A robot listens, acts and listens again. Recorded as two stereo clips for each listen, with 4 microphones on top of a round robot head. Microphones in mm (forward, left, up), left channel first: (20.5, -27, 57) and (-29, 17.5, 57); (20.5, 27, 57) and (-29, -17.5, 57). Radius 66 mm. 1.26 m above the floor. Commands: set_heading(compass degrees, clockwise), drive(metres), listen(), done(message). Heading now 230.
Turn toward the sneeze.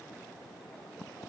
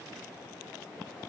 listen()
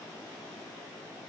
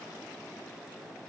listen()
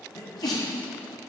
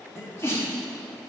set_heading(240)
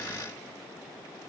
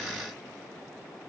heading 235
done("I heard a sneeze from this way, but can't make it out now.")